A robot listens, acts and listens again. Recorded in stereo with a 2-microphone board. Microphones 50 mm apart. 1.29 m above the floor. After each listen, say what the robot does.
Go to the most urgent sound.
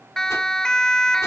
Turn 30° left.
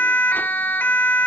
Turn 135° left.
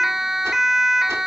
Drive 1.0 m forward.
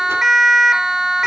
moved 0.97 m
Turn 10° right.
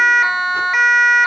Drive 1.0 m forward.
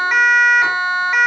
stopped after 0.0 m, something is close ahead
I am next to the siren.